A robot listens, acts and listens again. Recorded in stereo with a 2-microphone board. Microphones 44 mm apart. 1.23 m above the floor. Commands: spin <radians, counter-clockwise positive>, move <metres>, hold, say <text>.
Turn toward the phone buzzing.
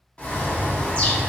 hold
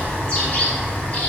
hold
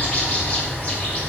say I can't make out a phone buzzing to turn to.